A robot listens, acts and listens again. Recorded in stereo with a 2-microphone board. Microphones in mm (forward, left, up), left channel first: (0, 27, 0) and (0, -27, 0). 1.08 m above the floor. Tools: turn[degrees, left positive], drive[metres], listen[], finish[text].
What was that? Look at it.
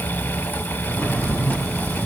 Thought: The drawer: about 35° left or 145° left.
Action: turn[35]
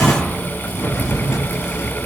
Thought: So it is at 110° left.
Action: turn[110]
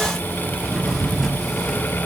Action: finish[Facing the drawer, over 4 m away.]